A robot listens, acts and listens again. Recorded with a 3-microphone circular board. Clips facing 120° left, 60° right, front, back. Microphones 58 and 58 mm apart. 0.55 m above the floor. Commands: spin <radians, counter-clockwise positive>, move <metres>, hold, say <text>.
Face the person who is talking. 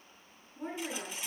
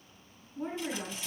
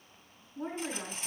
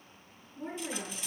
say Found it: a woman speaking, straight ahead, over 4 m away.